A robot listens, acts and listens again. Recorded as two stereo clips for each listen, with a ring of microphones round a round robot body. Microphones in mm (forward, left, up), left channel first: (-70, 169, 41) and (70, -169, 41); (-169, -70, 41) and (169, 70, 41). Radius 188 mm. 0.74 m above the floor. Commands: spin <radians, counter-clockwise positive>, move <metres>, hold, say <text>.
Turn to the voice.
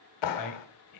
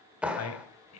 spin 2.62
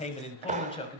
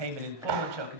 spin 0.61
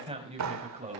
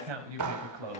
say Facing the man speaking.